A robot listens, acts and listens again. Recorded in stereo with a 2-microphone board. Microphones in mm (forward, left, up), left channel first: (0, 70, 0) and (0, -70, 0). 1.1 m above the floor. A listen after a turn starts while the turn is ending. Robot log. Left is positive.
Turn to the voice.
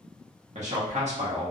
note: The man speaking: about 55° right or 125° right.
cmd yaw -55
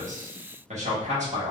note: So it is at 65° right.
cmd yaw -65
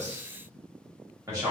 note: The man speaking is now 25° right.
cmd yaw -25
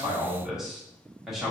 end: Found it: a man speaking, straight ahead, 1 to 2 m away.